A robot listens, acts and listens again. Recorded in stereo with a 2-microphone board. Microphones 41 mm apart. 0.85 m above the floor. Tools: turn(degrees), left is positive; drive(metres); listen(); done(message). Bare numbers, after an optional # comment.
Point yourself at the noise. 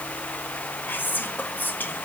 # The whispering: about 50° left or 130° left.
turn(50)
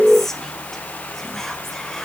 # So it is at 10° left.
turn(10)
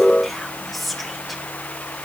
done("Facing the whispering.")